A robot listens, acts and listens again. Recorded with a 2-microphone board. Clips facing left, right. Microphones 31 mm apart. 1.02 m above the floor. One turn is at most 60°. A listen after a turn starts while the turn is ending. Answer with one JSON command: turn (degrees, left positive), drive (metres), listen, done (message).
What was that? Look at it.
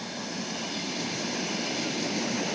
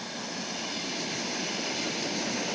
{"listen": true}
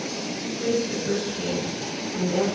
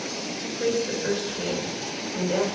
{"turn": -55}
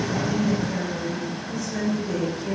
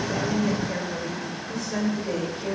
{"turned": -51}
{"turn": -60}
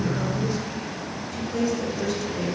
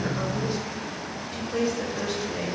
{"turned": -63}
{"turn": -30}
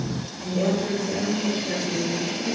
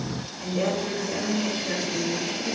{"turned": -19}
{"turn": -10}
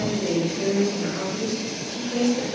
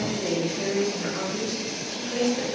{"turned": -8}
{"done": "Found it: a woman speaking, straight ahead, 2 to 4 m away."}